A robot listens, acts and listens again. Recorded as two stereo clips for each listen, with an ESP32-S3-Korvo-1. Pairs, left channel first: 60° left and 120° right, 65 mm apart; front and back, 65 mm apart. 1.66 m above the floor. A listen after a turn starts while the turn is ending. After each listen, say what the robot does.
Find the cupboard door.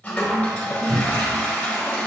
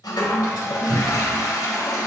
Turn 170° right.
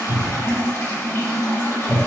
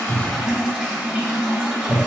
Turn 65° right.
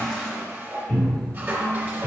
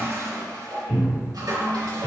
Turn 15° left.
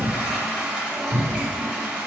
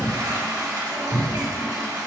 Facing the cupboard door, 1 to 2 m away.